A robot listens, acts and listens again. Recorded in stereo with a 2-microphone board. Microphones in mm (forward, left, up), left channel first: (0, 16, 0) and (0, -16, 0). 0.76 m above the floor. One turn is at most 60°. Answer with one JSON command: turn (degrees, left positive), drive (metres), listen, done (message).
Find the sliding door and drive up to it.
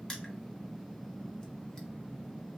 {"listen": true}
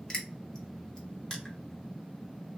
{"listen": true}
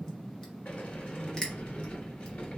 {"turn": 55}
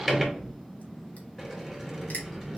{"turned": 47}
{"turn": 10}
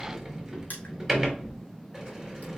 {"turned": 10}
{"drive": 1.0}
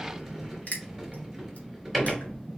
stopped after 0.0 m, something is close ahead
{"done": "Something is in my way. I am facing the sliding door but have not reached it."}